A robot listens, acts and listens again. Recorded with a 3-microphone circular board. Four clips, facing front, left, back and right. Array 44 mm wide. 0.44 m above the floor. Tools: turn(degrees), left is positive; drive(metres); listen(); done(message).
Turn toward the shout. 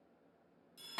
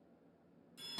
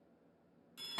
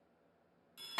listen()
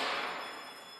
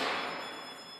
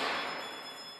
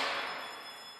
listen()
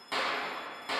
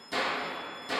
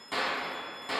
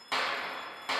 done("I can't make out a shout to turn to.")